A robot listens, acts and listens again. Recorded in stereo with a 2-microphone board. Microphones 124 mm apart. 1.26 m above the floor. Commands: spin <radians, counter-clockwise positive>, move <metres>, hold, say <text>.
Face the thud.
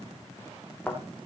spin 0.52
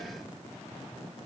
hold
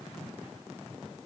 say I heard a thud, but can't make it out now. It was about 20° right or 140° left.